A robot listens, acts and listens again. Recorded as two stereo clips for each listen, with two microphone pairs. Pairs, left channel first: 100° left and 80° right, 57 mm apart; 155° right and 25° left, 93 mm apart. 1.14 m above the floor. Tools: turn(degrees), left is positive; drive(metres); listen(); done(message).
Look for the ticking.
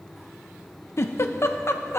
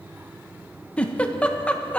listen()
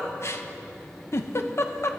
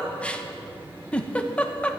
listen()
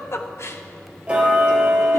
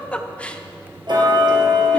turn(degrees=-10)
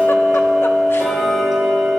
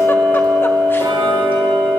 done("Found it: ticking, straight ahead, 2 to 4 m away.")